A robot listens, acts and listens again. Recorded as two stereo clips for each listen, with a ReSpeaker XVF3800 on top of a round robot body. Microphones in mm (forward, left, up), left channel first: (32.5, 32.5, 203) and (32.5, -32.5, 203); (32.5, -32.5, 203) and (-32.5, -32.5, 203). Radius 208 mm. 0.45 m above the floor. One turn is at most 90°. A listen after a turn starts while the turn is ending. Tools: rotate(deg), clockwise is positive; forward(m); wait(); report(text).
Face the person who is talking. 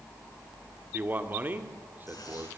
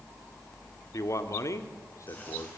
rotate(30)
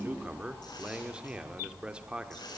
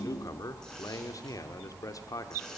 rotate(15)
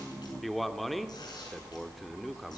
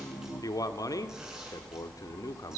report("Found it: a man speaking, straight ahead.")